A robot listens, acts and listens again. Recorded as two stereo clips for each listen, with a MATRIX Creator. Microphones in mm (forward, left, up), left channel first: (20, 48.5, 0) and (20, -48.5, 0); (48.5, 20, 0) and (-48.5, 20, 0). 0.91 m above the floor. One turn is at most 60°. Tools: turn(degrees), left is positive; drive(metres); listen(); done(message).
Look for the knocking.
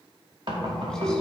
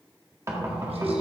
turn(degrees=-60)
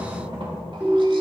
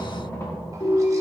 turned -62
turn(degrees=-60)
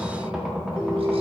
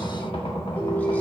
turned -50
done("Found it: knocking, straight ahead.")